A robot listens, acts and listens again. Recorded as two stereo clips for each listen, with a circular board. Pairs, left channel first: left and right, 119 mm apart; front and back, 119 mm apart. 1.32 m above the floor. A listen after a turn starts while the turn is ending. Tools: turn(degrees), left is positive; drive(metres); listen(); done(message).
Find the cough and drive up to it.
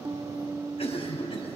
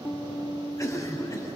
turn(degrees=60)
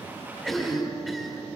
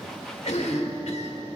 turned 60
drive(metres=1.0)
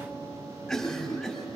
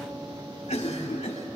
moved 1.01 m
drive(metres=1.0)
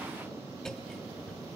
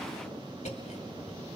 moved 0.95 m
drive(metres=1.0)
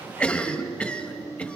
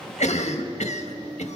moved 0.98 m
turn(degrees=10)
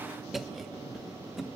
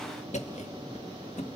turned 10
drive(metres=1.0)
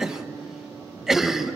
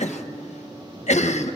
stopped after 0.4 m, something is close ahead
done("I am next to the cough.")